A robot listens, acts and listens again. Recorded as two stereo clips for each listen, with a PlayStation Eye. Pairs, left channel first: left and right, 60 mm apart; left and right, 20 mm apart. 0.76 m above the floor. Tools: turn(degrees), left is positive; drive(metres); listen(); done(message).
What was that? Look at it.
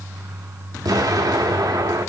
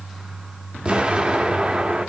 turn(degrees=-90)
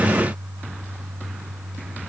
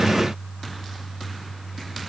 done("I heard an explosion from this way, but can't make it out now.")